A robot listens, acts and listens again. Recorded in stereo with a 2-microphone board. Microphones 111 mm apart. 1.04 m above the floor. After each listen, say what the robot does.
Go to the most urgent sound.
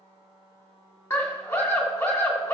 Turn 25° left.
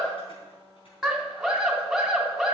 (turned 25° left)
Drive 1.0 m forward.
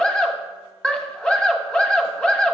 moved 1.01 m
Drive 1.0 m forward.
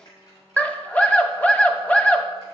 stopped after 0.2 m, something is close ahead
Turn 10° left.
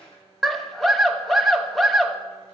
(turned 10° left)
Arrived at the scream, straight ahead.